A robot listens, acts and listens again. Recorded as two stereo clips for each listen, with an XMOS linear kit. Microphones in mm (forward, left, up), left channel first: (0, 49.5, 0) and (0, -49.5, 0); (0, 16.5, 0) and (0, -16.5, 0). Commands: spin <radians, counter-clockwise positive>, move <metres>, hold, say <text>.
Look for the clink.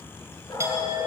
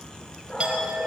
spin -0.52
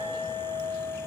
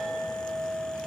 say Facing the clink, over 4 m away.